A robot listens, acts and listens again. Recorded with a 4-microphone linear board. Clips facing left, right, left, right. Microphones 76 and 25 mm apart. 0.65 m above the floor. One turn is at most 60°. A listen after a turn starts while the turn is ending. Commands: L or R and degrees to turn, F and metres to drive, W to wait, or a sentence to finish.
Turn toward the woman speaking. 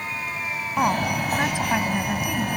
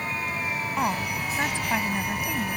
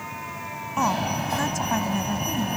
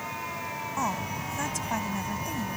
L30
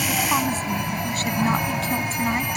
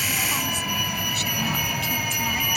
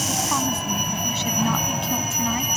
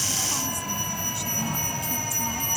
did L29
W
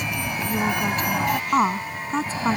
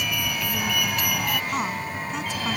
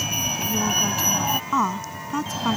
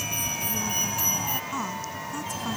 L60
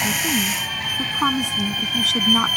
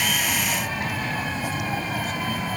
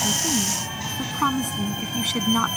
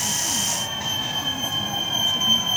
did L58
L60
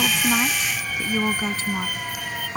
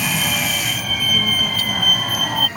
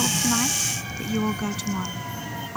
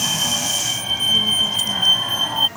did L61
L25
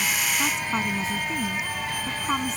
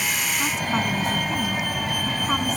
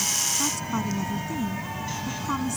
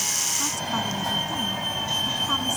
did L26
W
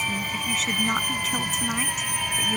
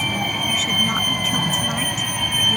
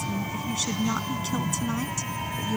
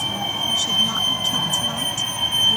W
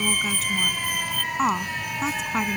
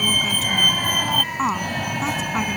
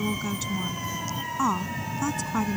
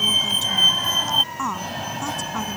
Facing the woman speaking.